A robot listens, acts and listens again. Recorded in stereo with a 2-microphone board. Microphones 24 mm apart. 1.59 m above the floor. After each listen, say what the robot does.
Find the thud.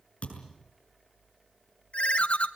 Turn 60° left.
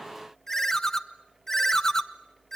Keep listening.
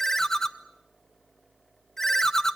I heard a thud, but can't make it out now. It was about straight ahead or 60° left.